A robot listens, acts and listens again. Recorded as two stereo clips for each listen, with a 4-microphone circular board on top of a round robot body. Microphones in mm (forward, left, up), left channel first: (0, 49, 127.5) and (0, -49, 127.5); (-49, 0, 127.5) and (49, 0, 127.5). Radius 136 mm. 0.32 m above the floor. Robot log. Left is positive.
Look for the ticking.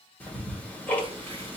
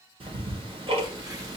note: The ticking: 20° left.
cmd yaw +20
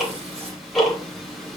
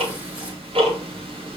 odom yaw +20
end: Facing the ticking, 1 to 2 m away.